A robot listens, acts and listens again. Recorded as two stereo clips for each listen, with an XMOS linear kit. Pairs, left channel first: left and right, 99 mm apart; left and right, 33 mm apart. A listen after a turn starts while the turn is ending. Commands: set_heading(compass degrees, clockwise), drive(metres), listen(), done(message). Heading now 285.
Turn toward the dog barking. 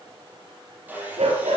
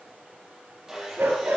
set_heading(15)
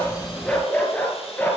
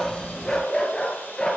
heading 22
set_heading(2)
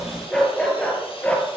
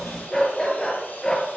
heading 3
set_heading(348)
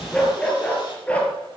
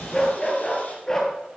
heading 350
set_heading(335)
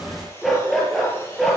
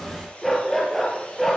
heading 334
done("Facing the dog barking.")